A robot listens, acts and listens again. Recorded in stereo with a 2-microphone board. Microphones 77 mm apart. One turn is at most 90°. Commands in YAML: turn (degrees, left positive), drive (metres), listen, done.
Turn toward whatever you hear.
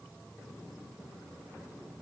listen: true
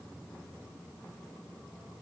listen: true
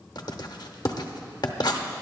turn: 65
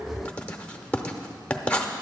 turn: 20
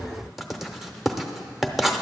done: "Facing the writing."